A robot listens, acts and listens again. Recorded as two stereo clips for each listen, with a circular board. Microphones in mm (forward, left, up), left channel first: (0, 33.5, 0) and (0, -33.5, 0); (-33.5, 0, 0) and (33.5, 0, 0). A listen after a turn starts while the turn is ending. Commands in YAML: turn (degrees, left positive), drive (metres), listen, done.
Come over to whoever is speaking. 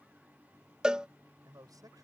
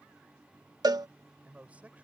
turn: -70
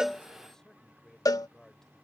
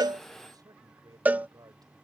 drive: 1.0
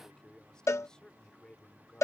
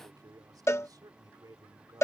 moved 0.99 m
turn: 10
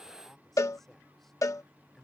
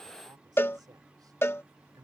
drive: 1.0
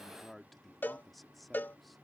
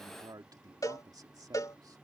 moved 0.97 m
drive: 1.0
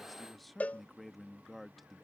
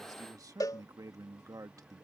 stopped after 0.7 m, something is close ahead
done: "I am next to the man speaking."